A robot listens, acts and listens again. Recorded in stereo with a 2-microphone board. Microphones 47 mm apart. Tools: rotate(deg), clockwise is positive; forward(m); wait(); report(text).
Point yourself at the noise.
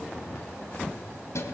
rotate(-90)
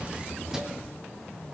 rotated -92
wait()
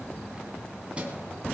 rotate(25)
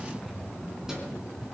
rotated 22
wait()
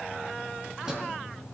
rotate(15)
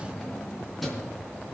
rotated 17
report("Found it: keys jangling, straight ahead, 2 to 4 m away.")